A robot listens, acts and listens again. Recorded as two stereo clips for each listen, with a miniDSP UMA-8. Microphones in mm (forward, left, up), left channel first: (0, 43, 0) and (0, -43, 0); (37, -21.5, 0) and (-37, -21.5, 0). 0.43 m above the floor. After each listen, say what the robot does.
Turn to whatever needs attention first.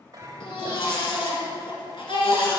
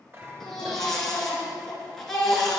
Turn 85° left.
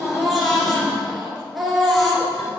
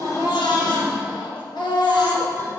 Found it: a baby crying, straight ahead, 1 to 2 m away.